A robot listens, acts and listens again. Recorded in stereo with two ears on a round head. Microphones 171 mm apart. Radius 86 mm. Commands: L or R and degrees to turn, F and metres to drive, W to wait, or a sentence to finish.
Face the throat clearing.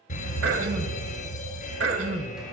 R70
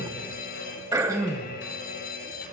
R20
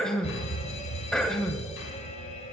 Facing the throat clearing.